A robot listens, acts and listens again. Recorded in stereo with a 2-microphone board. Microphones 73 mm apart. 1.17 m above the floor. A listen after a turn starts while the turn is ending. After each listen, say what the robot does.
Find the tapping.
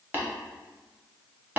Turn 25° right.
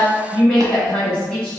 Keep listening.
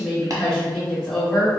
Keep listening.
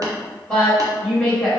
I heard tapping, but can't make it out now. It was about straight ahead or 130° right.